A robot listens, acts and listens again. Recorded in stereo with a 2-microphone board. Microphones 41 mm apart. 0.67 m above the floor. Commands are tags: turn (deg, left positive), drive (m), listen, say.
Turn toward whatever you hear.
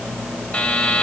<turn deg="35"/>
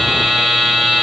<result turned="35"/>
<say>Found it: a buzzer, straight ahead.</say>